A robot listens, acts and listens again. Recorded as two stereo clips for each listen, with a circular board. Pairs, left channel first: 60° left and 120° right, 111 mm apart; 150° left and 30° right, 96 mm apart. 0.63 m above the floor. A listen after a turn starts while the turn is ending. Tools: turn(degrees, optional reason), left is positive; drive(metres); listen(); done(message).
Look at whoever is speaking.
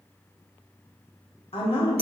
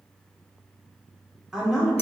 turn(degrees=60, reason="The woman speaking: 60° left.")
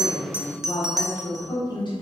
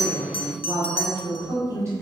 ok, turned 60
turn(degrees=25, reason="The woman speaking is now 25° left.")
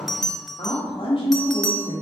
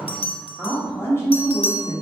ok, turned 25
turn(degrees=40, reason="The woman speaking is now 40° left.")
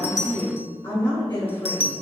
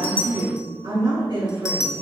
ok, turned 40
done("Facing the woman speaking.")